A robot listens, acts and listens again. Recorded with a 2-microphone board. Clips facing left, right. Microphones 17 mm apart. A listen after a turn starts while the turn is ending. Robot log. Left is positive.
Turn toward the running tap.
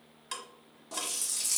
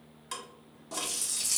cmd yaw -30
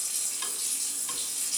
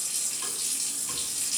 note: So it is at 145° right.
cmd yaw -145
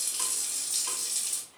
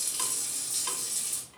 note: The running tap is now 45° left.
cmd yaw +45
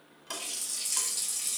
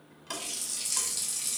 note: The running tap is now 10° right.
cmd yaw -10
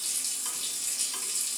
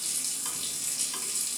end: Found it: a running tap, straight ahead.